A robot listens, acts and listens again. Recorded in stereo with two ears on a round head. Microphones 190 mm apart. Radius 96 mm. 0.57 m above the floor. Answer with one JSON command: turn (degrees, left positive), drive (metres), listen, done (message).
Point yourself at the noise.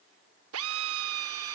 {"turn": -70}
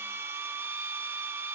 {"turn": -10}
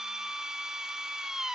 {"done": "Found it: a drill, straight ahead, under 1 m away."}